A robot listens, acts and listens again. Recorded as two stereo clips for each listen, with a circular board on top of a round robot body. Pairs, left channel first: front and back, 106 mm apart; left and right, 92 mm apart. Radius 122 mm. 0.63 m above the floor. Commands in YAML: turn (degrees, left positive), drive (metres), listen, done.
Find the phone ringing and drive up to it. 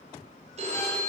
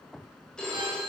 turn: 175
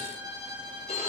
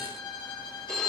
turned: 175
drive: 1.0
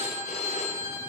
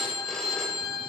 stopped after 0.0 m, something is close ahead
done: "Something is in my way. I am facing the phone ringing but have not reached it."